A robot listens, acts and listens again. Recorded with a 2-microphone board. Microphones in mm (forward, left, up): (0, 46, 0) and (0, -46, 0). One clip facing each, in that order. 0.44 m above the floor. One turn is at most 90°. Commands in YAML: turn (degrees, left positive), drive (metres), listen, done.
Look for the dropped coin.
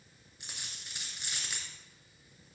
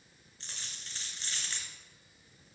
turn: 30
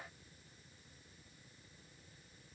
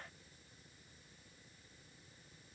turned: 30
listen: true
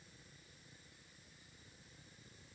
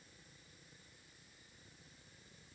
done: "I heard a dropped coin, but can't make it out now. It was about 20° right or 140° left."